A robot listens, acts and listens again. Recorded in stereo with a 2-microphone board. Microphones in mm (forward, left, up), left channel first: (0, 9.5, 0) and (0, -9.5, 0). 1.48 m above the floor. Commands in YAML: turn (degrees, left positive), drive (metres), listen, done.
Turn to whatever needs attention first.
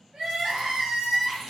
turn: -75
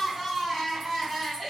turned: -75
done: "Facing the crying, 1 to 2 m away."